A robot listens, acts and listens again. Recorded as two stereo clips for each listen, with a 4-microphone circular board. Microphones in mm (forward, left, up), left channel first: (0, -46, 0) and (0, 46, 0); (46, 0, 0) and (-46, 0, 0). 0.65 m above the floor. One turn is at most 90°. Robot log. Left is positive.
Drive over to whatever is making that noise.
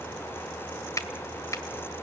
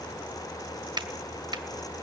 note: The finger snap: 145° right.
cmd yaw -90
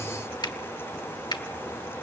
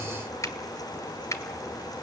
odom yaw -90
note: The finger snap is now 55° right.
cmd yaw -55
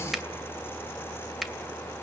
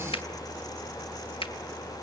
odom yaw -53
cmd fwd 1.0
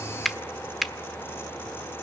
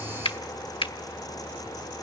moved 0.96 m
cmd fwd 1.0
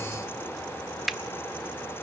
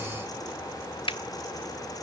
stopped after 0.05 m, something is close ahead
end: I am next to the finger snap.